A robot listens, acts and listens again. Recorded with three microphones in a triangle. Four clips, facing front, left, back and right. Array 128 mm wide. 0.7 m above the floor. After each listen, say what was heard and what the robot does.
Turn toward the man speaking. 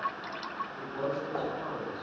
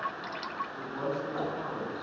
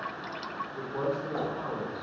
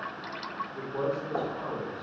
The man speaking: 140° right. Turn 140° right.
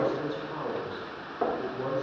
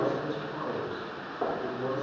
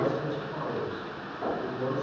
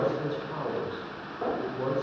The man speaking is now 65° right. Turn 65° right.
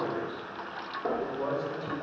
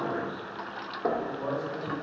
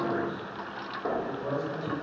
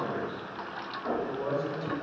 The man speaking is now 15° right. Turn 15° right.
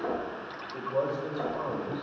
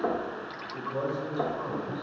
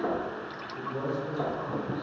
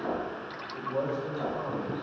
Found it: a man speaking, straight ahead, 2 to 4 m away.